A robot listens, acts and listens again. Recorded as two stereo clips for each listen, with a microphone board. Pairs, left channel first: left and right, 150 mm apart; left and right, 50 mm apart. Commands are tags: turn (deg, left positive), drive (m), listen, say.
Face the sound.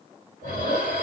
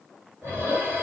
<turn deg="-65"/>
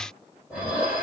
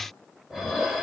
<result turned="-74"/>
<say>Facing the dishes clattering, 1 to 2 m away.</say>